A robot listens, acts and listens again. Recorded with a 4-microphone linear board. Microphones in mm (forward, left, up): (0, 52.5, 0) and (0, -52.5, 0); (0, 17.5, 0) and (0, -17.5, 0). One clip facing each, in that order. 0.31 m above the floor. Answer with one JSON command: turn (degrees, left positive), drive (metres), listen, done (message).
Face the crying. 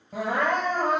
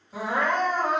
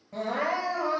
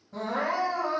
{"turn": 60}
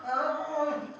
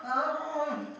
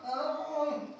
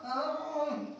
{"done": "Facing the crying, 1 to 2 m away."}